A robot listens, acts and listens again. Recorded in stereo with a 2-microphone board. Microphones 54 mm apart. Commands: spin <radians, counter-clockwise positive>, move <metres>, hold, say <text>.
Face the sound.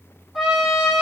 spin 0.52
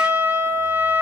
spin -0.52
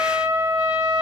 spin -0.26
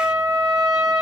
say Facing the trumpet.